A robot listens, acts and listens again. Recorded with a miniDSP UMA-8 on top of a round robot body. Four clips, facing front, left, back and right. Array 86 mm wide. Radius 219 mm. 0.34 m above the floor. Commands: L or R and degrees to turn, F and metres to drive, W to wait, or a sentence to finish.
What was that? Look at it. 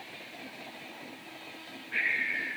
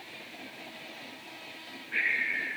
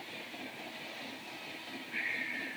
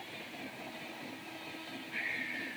L55
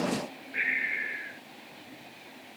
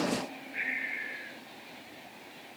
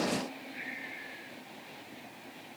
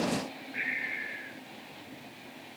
Found it: breathing, straight ahead.